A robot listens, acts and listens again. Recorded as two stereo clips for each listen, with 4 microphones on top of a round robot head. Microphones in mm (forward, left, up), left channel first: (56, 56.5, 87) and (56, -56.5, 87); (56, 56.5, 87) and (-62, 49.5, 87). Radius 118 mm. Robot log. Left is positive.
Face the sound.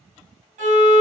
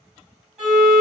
note: The violin: 90° right.
cmd yaw -90
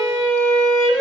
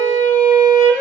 end: Found it: a violin, straight ahead.